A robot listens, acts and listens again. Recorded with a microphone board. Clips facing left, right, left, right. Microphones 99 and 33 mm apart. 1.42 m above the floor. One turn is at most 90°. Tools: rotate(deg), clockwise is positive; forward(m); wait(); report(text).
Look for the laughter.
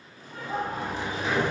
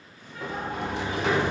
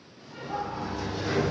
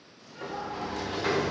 rotate(-40)
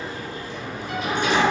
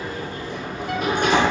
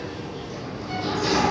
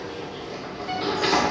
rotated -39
wait()
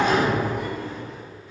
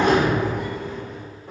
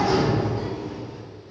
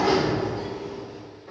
wait()
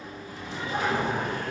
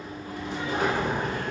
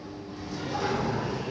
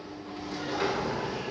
report("I heard laughter, but can't make it out now. It was about straight ahead or 105° left.")